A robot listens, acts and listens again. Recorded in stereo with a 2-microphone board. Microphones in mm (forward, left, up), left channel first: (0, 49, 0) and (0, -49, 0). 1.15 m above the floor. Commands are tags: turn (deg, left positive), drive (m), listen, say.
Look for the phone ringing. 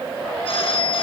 <turn deg="90"/>
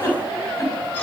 <listen/>
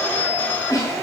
<turn deg="15"/>
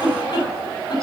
<listen/>
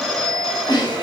<say>Found it: a phone ringing, straight ahead, over 4 m away.</say>